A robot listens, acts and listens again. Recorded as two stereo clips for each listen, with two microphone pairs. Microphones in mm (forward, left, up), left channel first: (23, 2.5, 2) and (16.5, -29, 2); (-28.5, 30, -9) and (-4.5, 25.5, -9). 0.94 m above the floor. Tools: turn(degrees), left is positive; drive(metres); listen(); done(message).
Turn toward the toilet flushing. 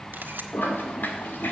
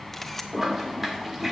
turn(degrees=70)
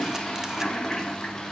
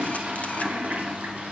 done("Found it: a toilet flushing, straight ahead, 1 to 2 m away.")